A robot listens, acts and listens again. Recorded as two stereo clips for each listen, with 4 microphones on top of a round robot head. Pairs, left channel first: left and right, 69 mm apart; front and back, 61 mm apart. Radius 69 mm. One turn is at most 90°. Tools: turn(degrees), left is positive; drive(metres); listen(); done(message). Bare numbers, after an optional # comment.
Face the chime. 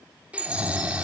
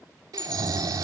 # The chime: 80° right.
turn(-80)
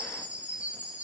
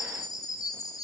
# The chime is now 15° right.
turn(-15)
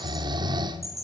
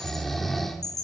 done("Facing the chime, 2 to 4 m away.")